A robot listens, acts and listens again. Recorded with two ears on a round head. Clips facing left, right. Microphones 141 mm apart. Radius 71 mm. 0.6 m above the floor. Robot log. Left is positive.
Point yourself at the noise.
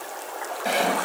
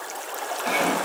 note: The sawing: about 45° left or 135° left.
cmd yaw +45
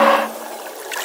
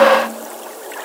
cmd idle
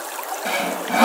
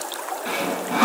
note: So it is at 90° left.
cmd yaw +90
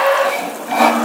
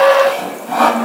note: The sawing is now 10° left.
cmd yaw +10
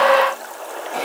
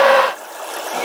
cmd idle
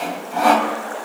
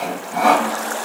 end: Found it: sawing, straight ahead.